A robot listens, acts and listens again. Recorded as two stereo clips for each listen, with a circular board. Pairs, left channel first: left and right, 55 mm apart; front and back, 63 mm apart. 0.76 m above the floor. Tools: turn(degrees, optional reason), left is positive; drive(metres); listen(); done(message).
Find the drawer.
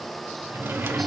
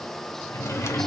turn(degrees=-45, reason="The drawer: 45° right.")
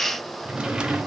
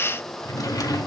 turn(degrees=-15, reason="The drawer is now 15° right.")
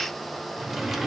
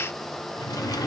done("Found it: a drawer, straight ahead.")